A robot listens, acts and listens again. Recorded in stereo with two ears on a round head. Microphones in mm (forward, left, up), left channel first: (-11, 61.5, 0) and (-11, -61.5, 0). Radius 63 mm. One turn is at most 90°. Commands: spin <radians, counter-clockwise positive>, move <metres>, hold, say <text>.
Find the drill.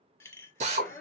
spin -0.87
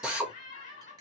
say Found it: a drill, straight ahead, 1 to 2 m away.